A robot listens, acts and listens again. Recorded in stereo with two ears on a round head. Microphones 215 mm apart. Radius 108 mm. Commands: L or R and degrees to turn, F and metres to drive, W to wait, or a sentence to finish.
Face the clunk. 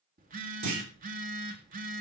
R90
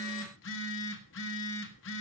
I heard a clunk from this way, but can't make it out now.